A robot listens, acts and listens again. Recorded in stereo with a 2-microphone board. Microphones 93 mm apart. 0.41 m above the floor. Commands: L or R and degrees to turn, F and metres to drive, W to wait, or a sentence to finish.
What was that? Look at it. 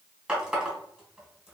R30
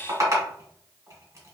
R135
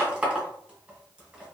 R10
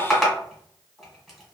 Found it: a running tap, straight ahead.